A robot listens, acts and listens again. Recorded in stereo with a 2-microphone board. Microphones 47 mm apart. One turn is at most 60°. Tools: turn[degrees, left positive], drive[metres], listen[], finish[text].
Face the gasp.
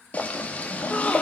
Thought: The gasp: about 30° left or 150° left.
Action: turn[30]
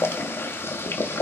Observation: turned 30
Action: listen[]
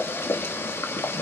Action: finish[I heard a gasp, but can't make it out now. It was about straight ahead or 120° left.]